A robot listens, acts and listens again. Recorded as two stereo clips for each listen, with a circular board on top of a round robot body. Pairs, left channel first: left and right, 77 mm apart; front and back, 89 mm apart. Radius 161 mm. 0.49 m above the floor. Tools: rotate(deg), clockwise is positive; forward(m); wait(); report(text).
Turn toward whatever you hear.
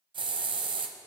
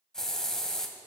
rotate(85)
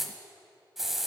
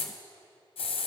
report("Found it: a hiss, straight ahead.")